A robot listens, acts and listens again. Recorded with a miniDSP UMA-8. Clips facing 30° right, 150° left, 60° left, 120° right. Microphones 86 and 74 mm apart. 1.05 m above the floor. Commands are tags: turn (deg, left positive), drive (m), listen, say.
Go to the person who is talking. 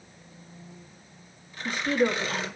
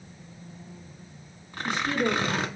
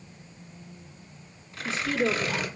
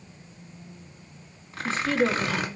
<turn deg="-70"/>
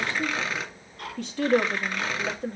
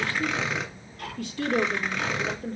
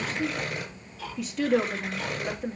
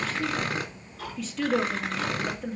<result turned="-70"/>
<turn deg="-20"/>
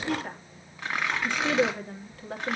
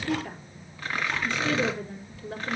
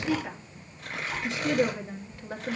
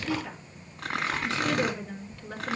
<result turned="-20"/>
<drive m="1.0"/>
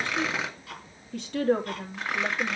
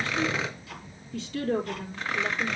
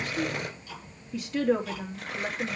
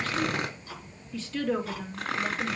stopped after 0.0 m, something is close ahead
<turn deg="-10"/>
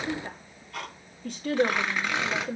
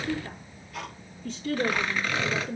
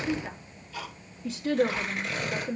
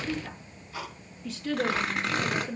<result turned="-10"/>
<say>Something is in my way. I am facing the woman speaking but have not reached it.</say>